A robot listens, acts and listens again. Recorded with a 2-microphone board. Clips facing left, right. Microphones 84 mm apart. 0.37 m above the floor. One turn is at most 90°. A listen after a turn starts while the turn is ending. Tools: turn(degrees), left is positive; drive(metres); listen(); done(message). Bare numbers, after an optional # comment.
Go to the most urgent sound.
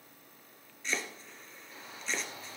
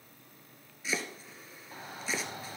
# The shout: about 60° right or 120° right.
turn(-60)
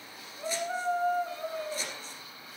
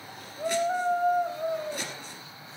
# So it is at 35° right.
turn(-35)
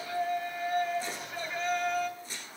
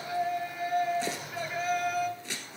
drive(1.0)
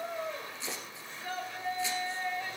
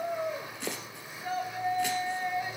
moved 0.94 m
# The shout is now 15° right.
turn(-15)
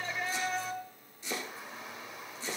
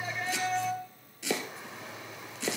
drive(1.0)
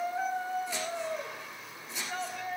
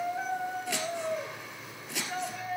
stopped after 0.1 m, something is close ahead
done("I am next to the shout.")